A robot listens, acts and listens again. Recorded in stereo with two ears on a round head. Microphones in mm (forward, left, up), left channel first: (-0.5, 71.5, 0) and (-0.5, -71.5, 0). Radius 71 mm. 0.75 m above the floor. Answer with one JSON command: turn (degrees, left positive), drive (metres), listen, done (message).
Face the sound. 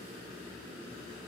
{"listen": true}
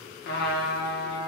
{"turn": 70}
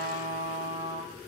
{"turn": 25}
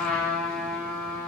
{"done": "Found it: a trumpet, straight ahead, 1 to 2 m away."}